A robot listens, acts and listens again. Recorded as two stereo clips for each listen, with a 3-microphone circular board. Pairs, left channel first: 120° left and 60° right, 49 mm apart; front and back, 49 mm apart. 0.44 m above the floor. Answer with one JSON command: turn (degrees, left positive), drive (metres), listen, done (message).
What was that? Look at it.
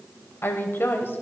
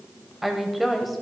{"turn": 95}
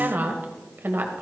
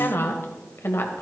{"turn": -25}
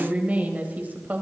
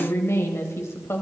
{"turn": -15}
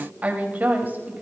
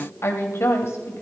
{"turn": -15}
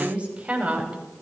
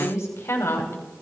{"done": "Found it: a woman speaking, straight ahead, 2 to 4 m away."}